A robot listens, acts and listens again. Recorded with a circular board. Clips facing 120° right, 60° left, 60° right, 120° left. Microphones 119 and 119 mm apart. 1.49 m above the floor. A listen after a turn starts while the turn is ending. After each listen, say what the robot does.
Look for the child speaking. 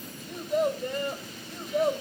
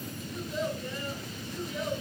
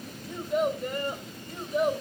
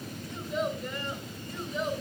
Turn 90° right.
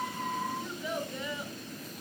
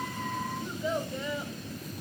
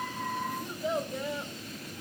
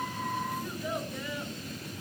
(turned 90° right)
Found it: a child speaking, straight ahead.